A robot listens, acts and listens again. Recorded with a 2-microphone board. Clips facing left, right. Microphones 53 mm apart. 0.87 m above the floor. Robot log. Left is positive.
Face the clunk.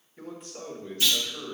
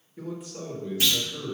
note: The clunk: about 70° right or 110° right.
cmd yaw -70
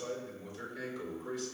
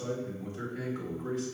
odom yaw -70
cmd idle
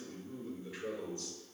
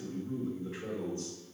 end: I heard a clunk, but can't make it out now. It was about straight ahead or 40° right.